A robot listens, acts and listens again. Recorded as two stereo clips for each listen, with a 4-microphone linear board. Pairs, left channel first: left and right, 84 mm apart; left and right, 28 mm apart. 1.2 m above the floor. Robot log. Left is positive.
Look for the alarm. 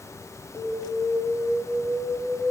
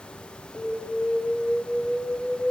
note: The alarm: about 25° right or 155° right.
cmd yaw -25
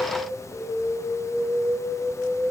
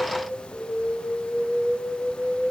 end: Found it: an alarm, straight ahead.